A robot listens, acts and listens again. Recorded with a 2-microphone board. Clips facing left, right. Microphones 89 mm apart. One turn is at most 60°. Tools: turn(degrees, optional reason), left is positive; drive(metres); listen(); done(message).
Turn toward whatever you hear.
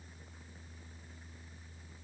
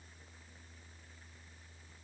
listen()
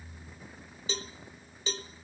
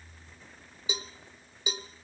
turn(degrees=-30)
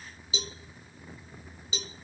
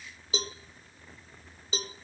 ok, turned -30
turn(degrees=-60, reason="So it is at 135° right.")
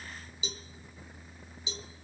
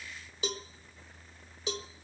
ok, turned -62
turn(degrees=-60, reason="The cowbell is now 70° right.")
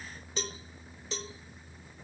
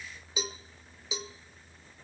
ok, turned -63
done("Found it: a cowbell, straight ahead, 1 to 2 m away.")